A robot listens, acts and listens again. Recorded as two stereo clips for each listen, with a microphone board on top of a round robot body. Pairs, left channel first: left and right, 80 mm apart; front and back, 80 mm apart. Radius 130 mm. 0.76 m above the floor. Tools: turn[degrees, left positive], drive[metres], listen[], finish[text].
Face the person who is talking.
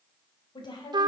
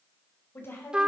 Thought: The woman speaking: 60° left.
Action: turn[60]
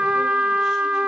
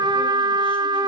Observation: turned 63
Action: listen[]
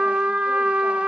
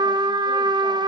Action: listen[]
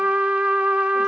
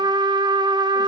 Action: finish[Facing where the woman speaking came from. I can't hear it now.]